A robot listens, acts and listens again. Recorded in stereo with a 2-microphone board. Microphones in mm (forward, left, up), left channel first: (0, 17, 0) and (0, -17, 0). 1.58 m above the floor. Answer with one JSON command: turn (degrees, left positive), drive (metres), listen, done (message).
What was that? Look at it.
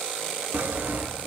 {"turn": -60}
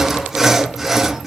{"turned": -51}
{"done": "Facing the sawing."}